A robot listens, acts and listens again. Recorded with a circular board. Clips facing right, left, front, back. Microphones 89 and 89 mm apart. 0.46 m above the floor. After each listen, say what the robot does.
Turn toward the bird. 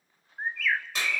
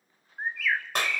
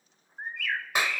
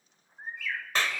Found it: a bird, straight ahead.